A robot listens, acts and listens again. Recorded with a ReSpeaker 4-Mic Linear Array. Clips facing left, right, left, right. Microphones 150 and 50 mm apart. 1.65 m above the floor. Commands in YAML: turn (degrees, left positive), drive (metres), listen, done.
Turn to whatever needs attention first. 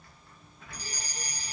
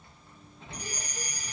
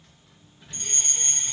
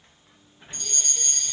turn: 35
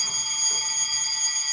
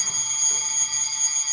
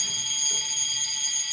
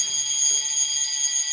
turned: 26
done: "Found it: a fire alarm, straight ahead, 2 to 4 m away."